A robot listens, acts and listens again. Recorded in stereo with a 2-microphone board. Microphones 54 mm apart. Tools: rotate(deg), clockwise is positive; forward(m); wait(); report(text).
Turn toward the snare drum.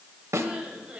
rotate(65)
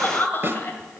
rotate(45)
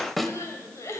report("Found it: a snare drum, straight ahead.")